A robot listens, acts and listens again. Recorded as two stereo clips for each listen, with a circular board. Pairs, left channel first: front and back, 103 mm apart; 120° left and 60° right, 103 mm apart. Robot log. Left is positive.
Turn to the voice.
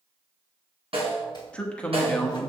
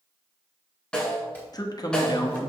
note: The man speaking: 75° left.
cmd yaw +75
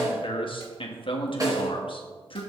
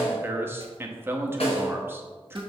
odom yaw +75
end: Found it: a man speaking, straight ahead, 1 to 2 m away.